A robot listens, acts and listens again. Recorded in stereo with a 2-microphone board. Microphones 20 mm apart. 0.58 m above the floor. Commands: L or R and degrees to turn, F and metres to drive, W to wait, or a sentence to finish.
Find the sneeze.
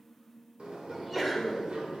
R30
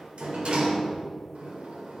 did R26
W
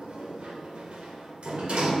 I heard a sneeze, but can't make it out now. It was about 10° left or 140° right.